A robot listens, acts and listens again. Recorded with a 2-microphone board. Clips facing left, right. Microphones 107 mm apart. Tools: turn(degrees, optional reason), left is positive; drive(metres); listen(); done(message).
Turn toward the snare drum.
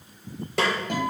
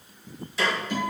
turn(degrees=65, reason="The snare drum: about 65° left or 115° left.")
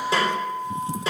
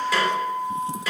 turn(degrees=30, reason="So it is at 30° left.")
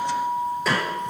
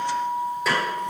done("Found it: a snare drum, straight ahead, 2 to 4 m away.")